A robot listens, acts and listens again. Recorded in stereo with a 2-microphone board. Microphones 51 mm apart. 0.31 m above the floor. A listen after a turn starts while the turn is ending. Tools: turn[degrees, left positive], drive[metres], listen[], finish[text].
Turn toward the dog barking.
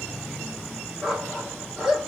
Action: turn[30]
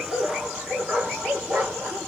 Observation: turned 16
Thought: So it is at 20° right.
Action: turn[-20]
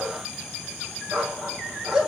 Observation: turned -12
Action: finish[Found it: a dog barking, straight ahead, 2 to 4 m away.]